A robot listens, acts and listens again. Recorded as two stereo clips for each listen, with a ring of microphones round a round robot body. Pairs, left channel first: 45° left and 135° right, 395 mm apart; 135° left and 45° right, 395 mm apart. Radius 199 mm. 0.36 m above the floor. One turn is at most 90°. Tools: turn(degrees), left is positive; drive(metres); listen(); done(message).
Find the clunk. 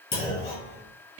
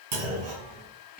turn(degrees=-30)
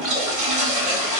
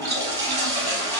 done("Facing where the clunk came from. I can't hear it now.")